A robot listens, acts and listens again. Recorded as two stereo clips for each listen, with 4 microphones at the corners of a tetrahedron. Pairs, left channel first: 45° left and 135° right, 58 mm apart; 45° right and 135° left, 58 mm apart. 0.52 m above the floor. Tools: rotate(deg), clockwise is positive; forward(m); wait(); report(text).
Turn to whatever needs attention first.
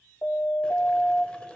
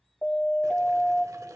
rotate(-10)
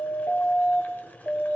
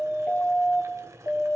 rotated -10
report("Facing the siren, 2 to 4 m away.")